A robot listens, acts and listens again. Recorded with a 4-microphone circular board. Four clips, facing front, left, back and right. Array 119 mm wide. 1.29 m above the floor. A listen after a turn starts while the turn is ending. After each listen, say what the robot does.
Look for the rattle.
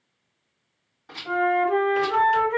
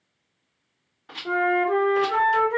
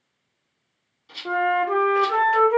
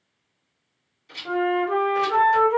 Turn 60° left.
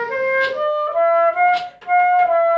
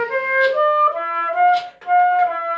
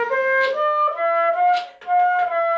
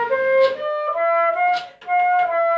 Keep listening.
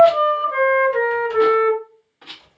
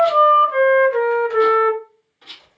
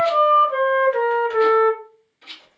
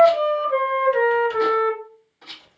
Turn 20° right.
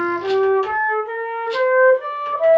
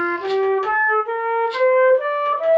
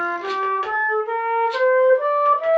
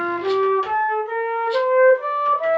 Keep listening.
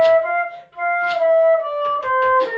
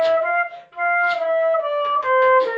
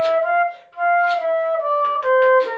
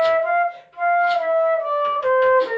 Keep listening.
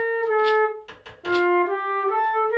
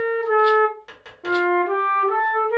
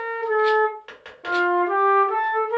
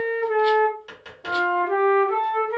Facing where the rattle came from. I can't hear it now.